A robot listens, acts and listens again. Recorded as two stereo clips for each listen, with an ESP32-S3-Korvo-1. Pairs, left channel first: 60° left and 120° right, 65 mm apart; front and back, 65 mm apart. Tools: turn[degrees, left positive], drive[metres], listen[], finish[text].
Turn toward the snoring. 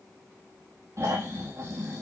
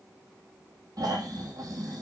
Thought: The snoring: 160° right.
Action: turn[-160]
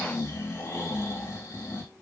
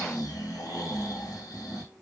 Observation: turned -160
Thought: The snoring is now 25° left.
Action: turn[25]
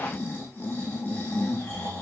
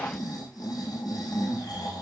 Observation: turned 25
Action: finish[Found it: snoring, straight ahead.]